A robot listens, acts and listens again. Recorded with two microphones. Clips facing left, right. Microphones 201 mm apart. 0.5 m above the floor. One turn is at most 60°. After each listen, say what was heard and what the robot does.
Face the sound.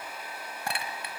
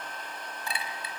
The clink: about 65° left or 115° left. Turn 60° left.
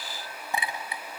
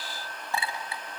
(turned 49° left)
So it is at 15° left. Turn 15° left.
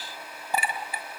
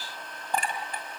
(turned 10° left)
Found it: a clink, straight ahead.